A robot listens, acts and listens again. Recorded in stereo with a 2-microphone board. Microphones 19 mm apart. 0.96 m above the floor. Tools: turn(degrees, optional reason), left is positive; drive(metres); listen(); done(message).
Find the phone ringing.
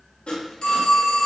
turn(degrees=55, reason="The phone ringing: about 55° left or 125° left.")
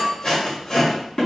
turn(degrees=70, reason="So it is at 70° left.")
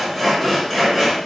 listen()
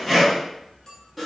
listen()
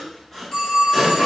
turn(degrees=40, reason="The phone ringing is now 40° left.")
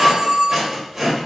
turn(degrees=20, reason="The phone ringing is now 20° left.")
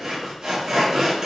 listen()
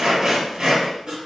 listen()
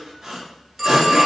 done("Facing the phone ringing.")